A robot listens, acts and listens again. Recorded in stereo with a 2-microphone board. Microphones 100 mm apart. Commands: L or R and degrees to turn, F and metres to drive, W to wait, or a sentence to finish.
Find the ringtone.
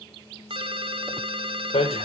R60
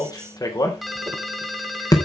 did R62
Found it: a ringtone, straight ahead.